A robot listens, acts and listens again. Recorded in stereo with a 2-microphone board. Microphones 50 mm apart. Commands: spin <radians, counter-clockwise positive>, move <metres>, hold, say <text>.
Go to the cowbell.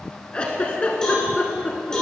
spin 0.52
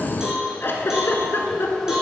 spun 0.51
spin -0.26
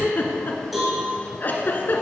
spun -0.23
move 1.0
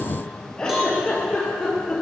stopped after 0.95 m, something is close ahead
say Arrived at the cowbell, straight ahead.